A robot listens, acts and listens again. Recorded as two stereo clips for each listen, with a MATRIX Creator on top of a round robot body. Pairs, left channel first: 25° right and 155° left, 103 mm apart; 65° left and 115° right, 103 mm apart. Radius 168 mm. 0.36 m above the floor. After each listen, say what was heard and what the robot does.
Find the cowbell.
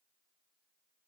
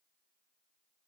Keep listening.
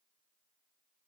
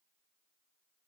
Keep listening.
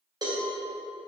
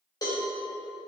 The cowbell: 115° left. Turn 115° left.
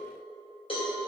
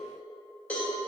The cowbell is now 10° right. Turn 10° right.
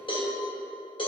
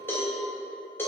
Found it: a cowbell, straight ahead, 2 to 4 m away.